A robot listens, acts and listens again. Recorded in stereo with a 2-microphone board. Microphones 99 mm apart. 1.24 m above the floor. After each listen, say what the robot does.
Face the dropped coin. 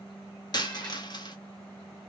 Turn 45° left.
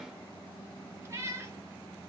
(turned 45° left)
Keep listening.
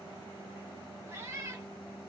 I heard a dropped coin, but can't make it out now. It was about straight ahead or 90° left.